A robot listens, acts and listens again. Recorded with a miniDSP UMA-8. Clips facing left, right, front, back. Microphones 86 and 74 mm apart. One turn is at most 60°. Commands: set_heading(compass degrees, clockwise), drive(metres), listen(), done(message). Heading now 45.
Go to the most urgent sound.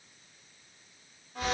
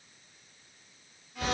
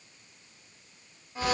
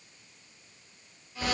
listen()
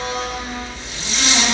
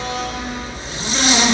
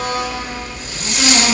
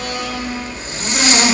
listen()
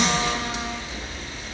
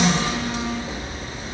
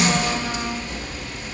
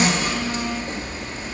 done("I can't make out anything urgent to turn to.")